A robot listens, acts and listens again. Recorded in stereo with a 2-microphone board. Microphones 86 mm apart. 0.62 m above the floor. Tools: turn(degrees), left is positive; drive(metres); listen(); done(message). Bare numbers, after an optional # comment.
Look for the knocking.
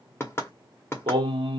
# The knocking: about 30° left or 150° left.
turn(30)
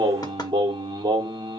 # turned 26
listen()
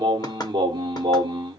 # So it is at 120° left.
turn(120)
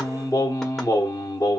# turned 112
listen()
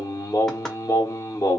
listen()
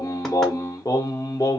done("I heard knocking from this way, but can't make it out now.")